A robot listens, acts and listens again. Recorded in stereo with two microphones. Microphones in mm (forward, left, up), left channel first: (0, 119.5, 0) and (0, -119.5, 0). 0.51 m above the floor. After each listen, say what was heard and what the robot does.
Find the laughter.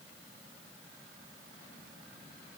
Keep listening.
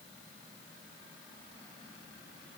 Keep listening.
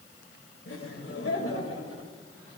The laughter: about 65° left or 115° left. Turn 65° left.
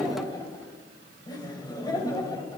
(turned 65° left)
So it is at 15° left. Turn 15° left.
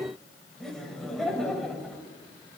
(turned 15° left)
Facing the laughter, 2 to 4 m away.